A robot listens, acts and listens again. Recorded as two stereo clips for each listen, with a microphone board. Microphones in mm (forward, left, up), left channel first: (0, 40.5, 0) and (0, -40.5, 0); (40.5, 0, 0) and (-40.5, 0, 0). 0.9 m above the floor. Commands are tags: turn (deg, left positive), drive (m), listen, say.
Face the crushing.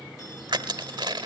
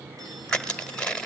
<turn deg="-80"/>
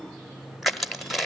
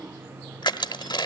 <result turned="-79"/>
<say>Found it: crushing, straight ahead, 1 to 2 m away.</say>